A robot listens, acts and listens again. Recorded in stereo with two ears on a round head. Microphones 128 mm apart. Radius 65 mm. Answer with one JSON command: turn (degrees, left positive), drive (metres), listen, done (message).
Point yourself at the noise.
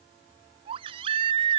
{"turn": -35}
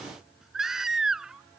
{"done": "Facing the baby crying."}